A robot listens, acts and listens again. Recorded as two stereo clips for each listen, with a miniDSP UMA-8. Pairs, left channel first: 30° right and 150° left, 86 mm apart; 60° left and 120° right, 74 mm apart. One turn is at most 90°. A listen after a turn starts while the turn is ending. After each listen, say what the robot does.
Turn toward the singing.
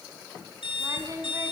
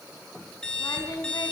Turn 90° left.
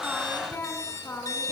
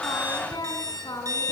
Turn 30° left.
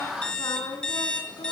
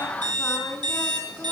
Found it: singing, straight ahead, over 4 m away.